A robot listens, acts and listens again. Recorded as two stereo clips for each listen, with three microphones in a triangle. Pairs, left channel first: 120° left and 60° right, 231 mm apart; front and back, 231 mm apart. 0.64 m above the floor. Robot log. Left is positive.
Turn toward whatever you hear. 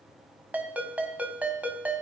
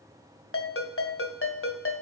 note: The ringtone: 25° left.
cmd yaw +25
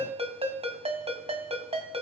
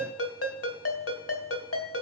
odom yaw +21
end: Found it: a ringtone, straight ahead, 2 to 4 m away.